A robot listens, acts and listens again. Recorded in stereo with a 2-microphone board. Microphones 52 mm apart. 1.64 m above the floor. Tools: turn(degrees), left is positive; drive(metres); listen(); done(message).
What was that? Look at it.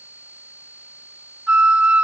turn(degrees=-15)
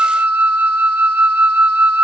turn(degrees=-150)
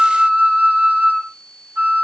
turn(degrees=-45)
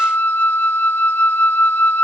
turn(degrees=30)
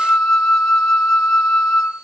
turn(degrees=15)
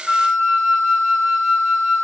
done("Found it: a flute, straight ahead.")